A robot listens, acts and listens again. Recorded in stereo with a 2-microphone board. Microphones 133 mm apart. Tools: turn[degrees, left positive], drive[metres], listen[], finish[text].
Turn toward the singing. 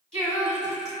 Action: turn[30]
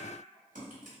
Action: listen[]
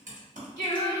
Thought: So it is at 140° left.
Action: turn[140]
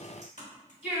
Thought: The singing is now 15° right.
Action: turn[-15]
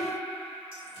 Action: finish[Facing the singing.]